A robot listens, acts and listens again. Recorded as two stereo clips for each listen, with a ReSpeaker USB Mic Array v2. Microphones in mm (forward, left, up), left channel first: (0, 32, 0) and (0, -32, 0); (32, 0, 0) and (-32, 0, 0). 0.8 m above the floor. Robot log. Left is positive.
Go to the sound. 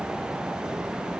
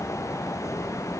cmd idle
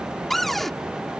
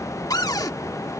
cmd fwd 1.0
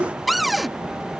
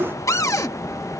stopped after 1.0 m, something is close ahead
end: Arrived at the cupboard door, straight ahead.